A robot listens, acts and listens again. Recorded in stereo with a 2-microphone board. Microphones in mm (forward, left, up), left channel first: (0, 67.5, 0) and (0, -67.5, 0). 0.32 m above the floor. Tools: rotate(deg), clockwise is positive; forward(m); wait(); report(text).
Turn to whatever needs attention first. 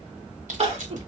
rotate(45)
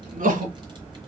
rotate(90)
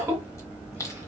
rotate(20)
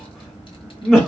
report("Facing the crying.")